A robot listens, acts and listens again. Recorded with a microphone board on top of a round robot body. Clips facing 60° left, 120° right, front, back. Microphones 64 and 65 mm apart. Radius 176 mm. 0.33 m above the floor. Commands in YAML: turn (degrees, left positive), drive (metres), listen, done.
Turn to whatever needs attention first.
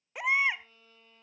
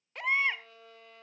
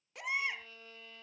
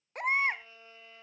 turn: 140
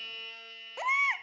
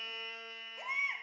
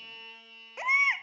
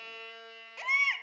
turn: 70
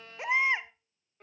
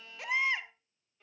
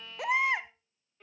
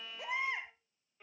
done: "Found it: a baby crying, straight ahead."